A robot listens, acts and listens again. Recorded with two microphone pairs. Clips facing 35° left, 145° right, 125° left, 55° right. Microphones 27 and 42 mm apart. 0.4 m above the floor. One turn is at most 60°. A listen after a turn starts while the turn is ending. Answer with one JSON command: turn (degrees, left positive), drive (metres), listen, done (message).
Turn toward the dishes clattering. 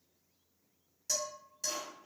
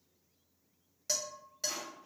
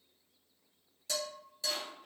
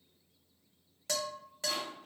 {"turn": -60}
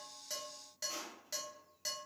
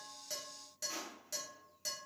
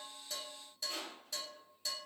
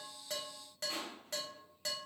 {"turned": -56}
{"turn": -35}
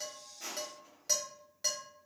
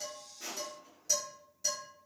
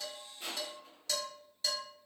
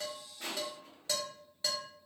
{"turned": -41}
{"done": "Facing the dishes clattering, 1 to 2 m away."}